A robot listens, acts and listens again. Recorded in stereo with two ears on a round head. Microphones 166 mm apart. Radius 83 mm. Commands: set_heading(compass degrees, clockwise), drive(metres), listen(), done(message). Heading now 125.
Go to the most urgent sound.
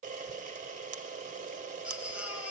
set_heading(155)
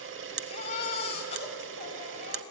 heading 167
set_heading(132)
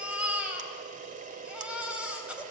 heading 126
drive(1.0)
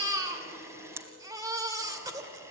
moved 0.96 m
set_heading(146)
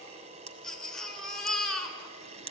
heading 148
drive(1.0)
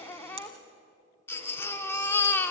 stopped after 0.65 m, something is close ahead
set_heading(138)
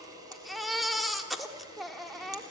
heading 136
done("Arrived at the baby crying, straight ahead.")